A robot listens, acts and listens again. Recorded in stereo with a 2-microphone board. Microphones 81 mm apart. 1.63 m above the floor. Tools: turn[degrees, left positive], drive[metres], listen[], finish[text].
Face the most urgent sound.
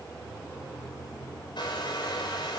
Action: listen[]
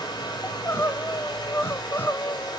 Thought: The crying: about 25° left or 155° left.
Action: turn[25]
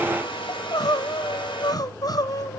Thought: So it is at 125° left.
Action: turn[125]
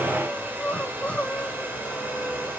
Thought: The crying is now 15° left.
Action: turn[15]
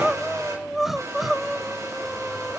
Action: finish[Facing the crying.]